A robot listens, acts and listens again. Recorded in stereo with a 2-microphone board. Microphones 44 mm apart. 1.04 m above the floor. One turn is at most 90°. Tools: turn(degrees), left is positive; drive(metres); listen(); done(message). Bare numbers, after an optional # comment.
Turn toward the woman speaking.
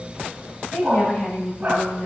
# The woman speaking: about 45° left or 135° left.
turn(45)
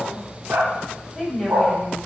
done("Facing the woman speaking, over 4 m away.")